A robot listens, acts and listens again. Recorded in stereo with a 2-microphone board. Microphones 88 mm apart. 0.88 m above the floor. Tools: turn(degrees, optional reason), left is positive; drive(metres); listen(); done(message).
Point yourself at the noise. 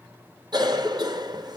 turn(degrees=-50, reason="The cough: about 50° right or 130° right.")
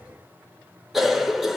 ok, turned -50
done("Found it: a cough, straight ahead.")